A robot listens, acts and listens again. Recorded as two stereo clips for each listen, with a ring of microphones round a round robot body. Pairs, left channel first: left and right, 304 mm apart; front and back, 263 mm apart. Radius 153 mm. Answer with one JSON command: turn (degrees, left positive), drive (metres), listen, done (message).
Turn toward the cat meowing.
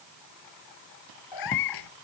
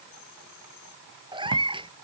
{"turn": 110}
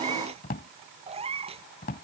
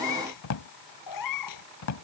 {"turn": -20}
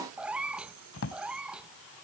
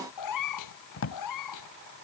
{"done": "Facing the cat meowing."}